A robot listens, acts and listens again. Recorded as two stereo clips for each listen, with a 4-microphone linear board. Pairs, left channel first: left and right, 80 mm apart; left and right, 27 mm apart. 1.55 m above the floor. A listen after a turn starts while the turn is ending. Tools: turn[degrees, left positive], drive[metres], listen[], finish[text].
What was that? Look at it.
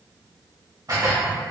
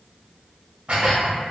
Thought: The dishes clattering: about 45° right or 135° right.
Action: turn[-45]
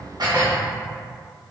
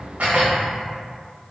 Thought: So it is at 80° right.
Action: turn[-80]
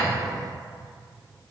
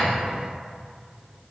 Action: listen[]
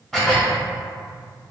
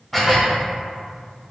Action: finish[Facing the dishes clattering, 1 to 2 m away.]